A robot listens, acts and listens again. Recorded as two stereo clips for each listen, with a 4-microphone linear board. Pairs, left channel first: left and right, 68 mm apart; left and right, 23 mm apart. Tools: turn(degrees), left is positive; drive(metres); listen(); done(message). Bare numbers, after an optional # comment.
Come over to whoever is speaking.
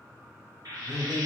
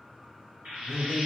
turn(-30)
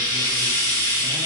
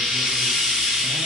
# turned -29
listen()
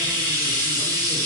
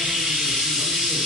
listen()
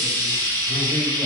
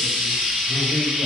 done("I heard a man speaking, but can't make it out now. It was about 20° left or 140° right. I did not reach it.")